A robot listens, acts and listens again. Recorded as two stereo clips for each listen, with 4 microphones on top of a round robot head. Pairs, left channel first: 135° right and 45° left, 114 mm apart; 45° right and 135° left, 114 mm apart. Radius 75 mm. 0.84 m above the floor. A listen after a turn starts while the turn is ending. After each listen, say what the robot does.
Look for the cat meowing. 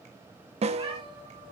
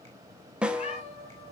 Facing the cat meowing, over 4 m away.